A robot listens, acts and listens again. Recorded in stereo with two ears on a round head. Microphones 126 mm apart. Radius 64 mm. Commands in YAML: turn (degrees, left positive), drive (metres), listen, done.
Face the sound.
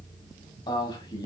turn: 30
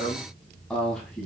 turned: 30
done: "Found it: a man speaking, straight ahead, 2 to 4 m away."